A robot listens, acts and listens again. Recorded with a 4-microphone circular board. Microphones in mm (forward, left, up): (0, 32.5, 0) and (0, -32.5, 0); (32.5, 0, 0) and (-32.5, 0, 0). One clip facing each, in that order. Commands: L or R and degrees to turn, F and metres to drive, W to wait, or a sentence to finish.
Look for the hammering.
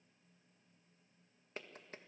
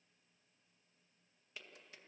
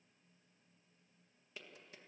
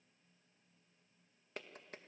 W
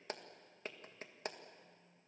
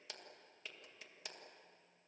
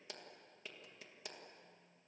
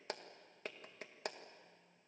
W
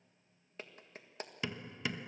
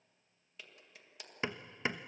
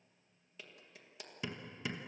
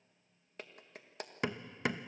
R150
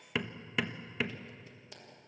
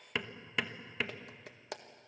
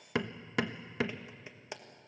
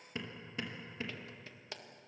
Facing the hammering, 1 to 2 m away.